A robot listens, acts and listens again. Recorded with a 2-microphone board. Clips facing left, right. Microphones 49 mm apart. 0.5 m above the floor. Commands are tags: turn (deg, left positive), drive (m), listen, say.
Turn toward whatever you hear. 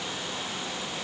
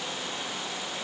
<listen/>
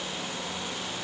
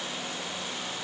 <listen/>
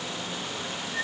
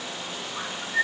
<turn deg="-35"/>
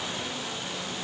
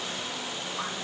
<listen/>
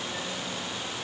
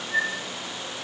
<turn deg="-110"/>
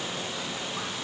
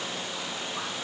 <listen/>
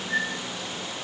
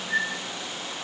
<say>Facing the bird.</say>